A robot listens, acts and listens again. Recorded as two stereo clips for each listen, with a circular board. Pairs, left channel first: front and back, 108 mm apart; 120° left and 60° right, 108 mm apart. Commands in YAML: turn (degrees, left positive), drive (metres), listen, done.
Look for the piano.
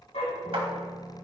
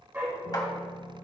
turn: 100
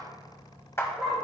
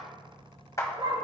listen: true
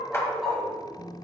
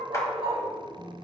done: "Found it: a piano, straight ahead."